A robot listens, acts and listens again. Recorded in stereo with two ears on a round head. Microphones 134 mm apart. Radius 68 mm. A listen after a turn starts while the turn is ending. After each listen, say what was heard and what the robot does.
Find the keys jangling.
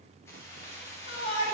The keys jangling: about 15° left or 165° left. Turn 15° left.
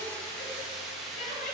Turn 30° left.
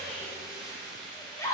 So it is at 30° right. Turn 30° right.
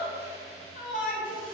Keep listening.
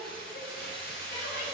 Found it: keys jangling, straight ahead.